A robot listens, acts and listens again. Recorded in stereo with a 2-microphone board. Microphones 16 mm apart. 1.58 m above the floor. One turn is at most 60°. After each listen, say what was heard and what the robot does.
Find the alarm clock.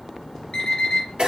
The alarm clock: about 60° left or 120° left. Turn 60° left.
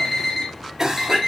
So it is at 40° left. Turn 40° left.
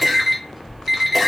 Found it: an alarm clock, straight ahead.